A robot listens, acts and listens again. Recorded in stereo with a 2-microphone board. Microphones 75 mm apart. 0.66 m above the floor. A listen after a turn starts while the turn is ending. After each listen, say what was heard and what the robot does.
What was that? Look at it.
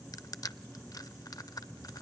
The crushing: about 60° left or 120° left. Turn 60° left.
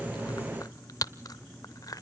So it is at 55° left. Turn 55° left.
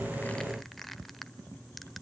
Found it: crushing, straight ahead.